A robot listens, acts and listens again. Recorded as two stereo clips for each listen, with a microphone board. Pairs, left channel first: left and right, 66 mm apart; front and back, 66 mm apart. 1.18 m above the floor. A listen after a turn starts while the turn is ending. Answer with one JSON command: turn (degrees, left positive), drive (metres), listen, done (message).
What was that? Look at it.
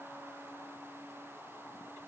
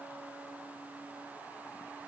{"listen": true}
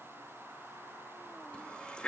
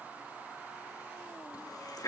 {"turn": 15}
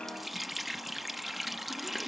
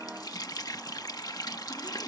{"done": "Found it: a running tap, straight ahead."}